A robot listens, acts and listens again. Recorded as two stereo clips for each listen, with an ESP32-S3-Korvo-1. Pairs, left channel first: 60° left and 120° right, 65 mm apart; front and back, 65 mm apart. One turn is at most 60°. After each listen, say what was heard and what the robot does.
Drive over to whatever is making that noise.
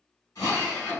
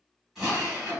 The drill: 95° left. Turn 60° left.
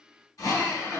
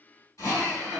The drill is now 40° left. Turn 40° left.
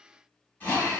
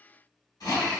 Drive 1.0 m forward.
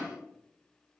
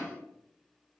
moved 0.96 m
Keep listening.
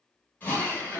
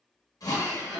Drive 1.0 m forward.
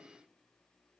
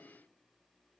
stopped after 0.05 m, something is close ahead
Keep listening.
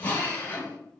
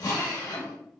I am next to the drill.